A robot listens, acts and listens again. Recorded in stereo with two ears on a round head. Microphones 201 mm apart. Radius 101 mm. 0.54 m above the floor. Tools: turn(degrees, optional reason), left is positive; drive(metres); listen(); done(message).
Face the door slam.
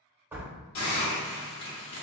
turn(degrees=-30)
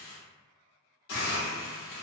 listen()
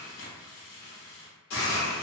done("I heard a door slam, but can't make it out now. It was about 20° left or 140° right.")